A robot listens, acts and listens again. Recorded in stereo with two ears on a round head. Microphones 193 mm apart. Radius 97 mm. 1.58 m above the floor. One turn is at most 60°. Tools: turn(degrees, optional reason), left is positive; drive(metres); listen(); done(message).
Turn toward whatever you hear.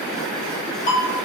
turn(degrees=35, reason="The ringtone: about 35° left or 145° left.")
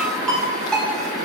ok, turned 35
done("Found it: a ringtone, straight ahead.")